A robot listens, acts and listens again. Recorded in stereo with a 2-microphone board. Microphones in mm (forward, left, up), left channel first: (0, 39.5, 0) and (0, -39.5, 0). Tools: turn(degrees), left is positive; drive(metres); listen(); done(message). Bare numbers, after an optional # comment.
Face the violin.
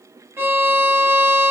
# The violin: about 30° right or 150° right.
turn(-30)
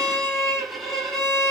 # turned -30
done("Found it: a violin, straight ahead.")